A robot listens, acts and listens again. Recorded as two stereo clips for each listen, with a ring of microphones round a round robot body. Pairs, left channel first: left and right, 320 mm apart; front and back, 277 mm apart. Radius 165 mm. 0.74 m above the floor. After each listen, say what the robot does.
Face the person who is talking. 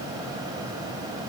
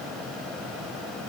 Keep listening.
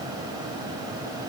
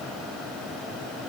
Keep listening.
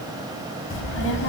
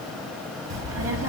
Turn 145° left.
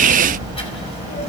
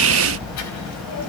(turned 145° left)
Turn 20° left.
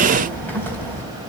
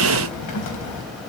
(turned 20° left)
Facing the child speaking, over 4 m away.